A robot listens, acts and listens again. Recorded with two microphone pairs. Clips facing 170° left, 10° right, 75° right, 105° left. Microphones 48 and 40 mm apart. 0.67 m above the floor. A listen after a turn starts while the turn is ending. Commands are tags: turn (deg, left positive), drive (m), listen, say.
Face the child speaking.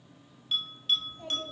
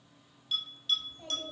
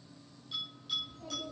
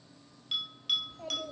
<turn deg="90"/>
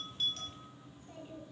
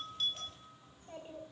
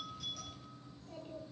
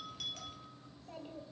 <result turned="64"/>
<turn deg="40"/>
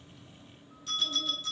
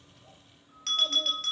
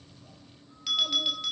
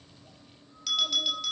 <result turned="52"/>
<turn deg="-15"/>
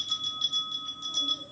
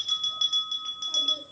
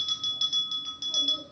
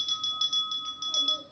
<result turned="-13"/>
<turn deg="25"/>
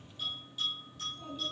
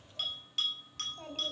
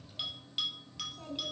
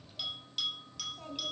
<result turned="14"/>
<turn deg="20"/>
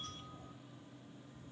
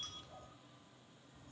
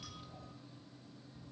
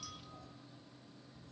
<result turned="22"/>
<listen/>
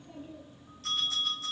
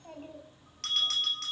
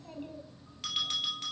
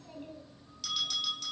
<say>Found it: a child speaking, straight ahead.</say>